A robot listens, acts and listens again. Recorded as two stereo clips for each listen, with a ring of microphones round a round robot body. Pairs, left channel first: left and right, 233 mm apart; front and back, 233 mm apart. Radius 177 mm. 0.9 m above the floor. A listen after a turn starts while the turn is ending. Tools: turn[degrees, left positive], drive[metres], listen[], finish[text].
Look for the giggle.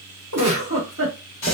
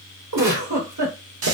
Thought: The giggle: 145° right.
Action: turn[-145]
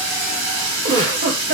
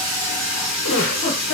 Thought: The giggle is now 55° right.
Action: turn[-55]
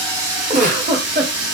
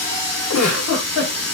Thought: The giggle is now 35° right.
Action: turn[-35]
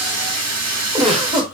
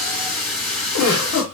Thought: The giggle is now 20° right.
Action: turn[-20]
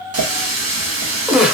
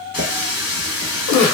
Action: finish[Found it: a giggle, straight ahead, 1 to 2 m away.]